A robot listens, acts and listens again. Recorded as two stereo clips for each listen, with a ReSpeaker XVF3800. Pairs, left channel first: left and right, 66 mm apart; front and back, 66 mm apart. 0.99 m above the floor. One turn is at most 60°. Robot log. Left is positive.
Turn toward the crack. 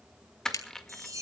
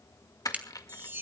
note: The crack: 115° left.
cmd yaw +60
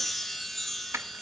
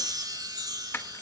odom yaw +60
note: Nothing new. It was at 55° left.
cmd yaw +55
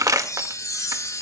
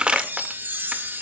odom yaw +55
end: I heard a crack from this way, but can't make it out now.